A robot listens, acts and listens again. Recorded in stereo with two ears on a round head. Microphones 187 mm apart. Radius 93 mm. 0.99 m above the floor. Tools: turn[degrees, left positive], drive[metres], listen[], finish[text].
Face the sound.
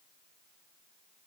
Action: listen[]
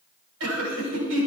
Action: turn[-90]
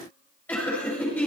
Thought: So it is at 10° left.
Action: turn[10]
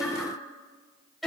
Action: finish[Found it: laughter, straight ahead, over 4 m away.]